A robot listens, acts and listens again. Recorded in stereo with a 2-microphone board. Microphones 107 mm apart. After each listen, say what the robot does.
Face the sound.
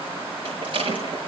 Turn 55° right.
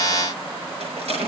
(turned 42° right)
Turn 80° right.
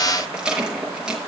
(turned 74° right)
Turn 10° right.
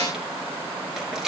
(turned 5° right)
Facing the rattle.